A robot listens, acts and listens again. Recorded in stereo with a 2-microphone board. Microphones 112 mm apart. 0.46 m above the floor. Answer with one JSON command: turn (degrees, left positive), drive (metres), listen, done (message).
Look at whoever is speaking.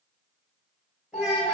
{"turn": -30}
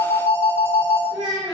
{"turn": -140}
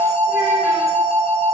{"listen": true}
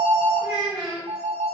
{"turn": -10}
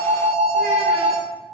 {"listen": true}
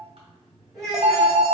{"done": "Facing the child speaking, 1 to 2 m away."}